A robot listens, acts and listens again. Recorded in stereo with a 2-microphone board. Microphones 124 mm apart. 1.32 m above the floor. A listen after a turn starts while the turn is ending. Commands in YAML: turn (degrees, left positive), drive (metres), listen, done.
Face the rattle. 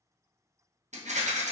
turn: -70
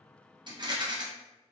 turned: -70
turn: -35
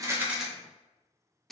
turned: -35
done: "Facing the rattle."